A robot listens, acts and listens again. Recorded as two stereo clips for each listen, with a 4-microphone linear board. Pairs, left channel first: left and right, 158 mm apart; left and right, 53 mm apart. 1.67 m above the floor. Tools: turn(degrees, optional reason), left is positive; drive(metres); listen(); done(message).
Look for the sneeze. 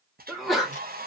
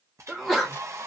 turn(degrees=30)
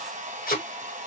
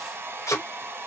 listen()
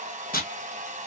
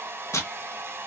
done("I heard a sneeze, but can't make it out now. It was about 30° right or 150° left.")